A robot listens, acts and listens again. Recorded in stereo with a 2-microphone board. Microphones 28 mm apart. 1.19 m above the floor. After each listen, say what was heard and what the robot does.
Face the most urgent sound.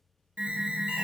The alarm: about 50° right or 130° right. Turn 50° right.
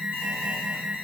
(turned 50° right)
So it is at 85° right. Turn 85° right.
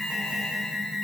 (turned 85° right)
Found it: an alarm, straight ahead.